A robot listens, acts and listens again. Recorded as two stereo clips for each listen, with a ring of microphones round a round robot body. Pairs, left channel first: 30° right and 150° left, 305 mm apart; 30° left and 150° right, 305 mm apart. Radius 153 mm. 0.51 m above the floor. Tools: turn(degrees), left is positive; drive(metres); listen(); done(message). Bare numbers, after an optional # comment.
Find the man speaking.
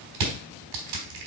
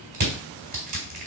listen()
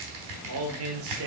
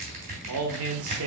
# The man speaking: straight behind.
turn(180)
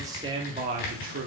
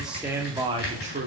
# The man speaking is now 170° left.
turn(170)
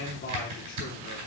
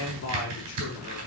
# The man speaking is now 15° left.
turn(15)
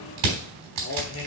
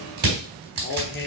done("Facing the man speaking.")